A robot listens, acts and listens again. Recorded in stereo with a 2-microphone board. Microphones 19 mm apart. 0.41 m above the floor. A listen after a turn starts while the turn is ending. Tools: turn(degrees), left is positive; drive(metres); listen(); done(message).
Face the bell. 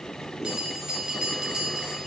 turn(degrees=-60)
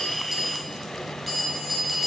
done("Found it: a bell, straight ahead, 1 to 2 m away.")